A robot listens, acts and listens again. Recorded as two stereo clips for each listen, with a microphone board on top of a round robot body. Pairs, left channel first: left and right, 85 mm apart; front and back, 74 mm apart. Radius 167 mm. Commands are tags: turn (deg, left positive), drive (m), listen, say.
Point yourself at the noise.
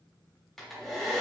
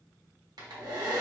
<turn deg="180"/>
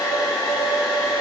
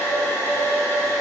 <turn deg="55"/>
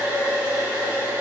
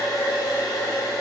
<turn deg="-20"/>
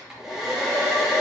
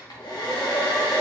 <say>Found it: a hair dryer, straight ahead, 1 to 2 m away.</say>